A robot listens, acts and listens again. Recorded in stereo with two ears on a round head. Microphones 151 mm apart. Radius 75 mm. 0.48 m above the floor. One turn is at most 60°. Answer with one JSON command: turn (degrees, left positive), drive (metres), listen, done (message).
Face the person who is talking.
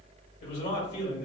{"turn": 60}
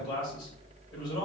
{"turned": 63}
{"turn": 30}
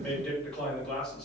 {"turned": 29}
{"done": "Found it: a man speaking, straight ahead, 1 to 2 m away."}